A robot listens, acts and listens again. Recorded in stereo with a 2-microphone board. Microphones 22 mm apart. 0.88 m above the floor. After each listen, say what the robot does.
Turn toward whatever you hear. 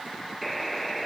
Turn 30° left.
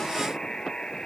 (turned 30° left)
Turn 150° left.
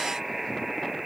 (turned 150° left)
Turn 10° right.
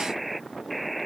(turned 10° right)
Found it: a buzzer, straight ahead.